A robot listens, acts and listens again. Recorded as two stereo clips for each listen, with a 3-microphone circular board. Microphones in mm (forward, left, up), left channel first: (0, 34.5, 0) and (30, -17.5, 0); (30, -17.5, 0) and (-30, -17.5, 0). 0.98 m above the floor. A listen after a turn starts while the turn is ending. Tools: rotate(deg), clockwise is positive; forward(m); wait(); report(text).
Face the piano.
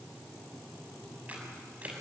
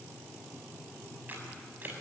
wait()
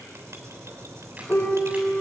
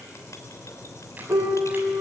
rotate(-180)
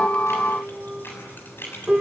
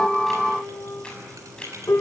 rotate(-15)
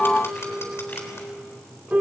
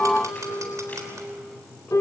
report("Found it: a piano, straight ahead.")